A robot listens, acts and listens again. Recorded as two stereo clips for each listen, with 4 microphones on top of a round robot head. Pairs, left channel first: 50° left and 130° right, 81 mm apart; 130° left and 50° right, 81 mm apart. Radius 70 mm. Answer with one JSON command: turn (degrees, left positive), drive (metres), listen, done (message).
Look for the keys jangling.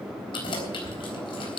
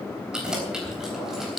{"turn": 35}
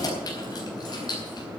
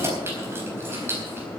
{"turn": 10}
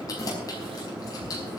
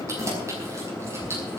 {"turn": 10}
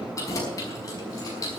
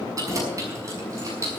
{"done": "Found it: keys jangling, straight ahead, over 4 m away."}